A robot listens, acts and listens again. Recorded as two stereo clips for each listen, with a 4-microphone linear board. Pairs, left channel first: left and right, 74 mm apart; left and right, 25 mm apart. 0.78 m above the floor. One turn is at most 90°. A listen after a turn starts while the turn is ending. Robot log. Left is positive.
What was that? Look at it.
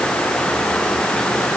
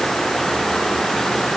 cmd idle
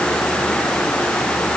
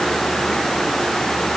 cmd idle
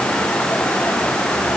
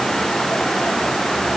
end: I can't make out anything to turn to.